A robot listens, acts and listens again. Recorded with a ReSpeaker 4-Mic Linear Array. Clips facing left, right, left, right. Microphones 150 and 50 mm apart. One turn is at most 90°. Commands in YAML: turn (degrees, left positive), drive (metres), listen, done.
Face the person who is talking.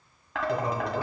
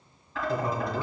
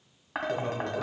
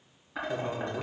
turn: 20
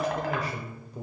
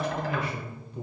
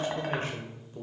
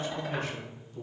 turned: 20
turn: 90
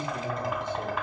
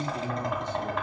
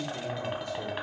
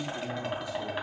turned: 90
turn: 70
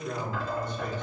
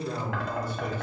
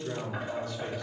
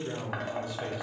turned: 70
turn: -10
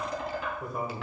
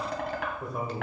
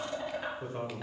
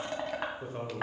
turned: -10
done: "Facing the man speaking."